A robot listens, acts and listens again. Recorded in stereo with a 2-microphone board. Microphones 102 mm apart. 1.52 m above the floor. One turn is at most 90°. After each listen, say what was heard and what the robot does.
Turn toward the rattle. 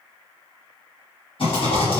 The rattle: about 60° left or 120° left. Turn 60° left.
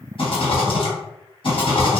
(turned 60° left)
So it is at 60° left. Turn 60° left.
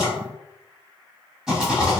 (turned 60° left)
Facing the rattle, 1 to 2 m away.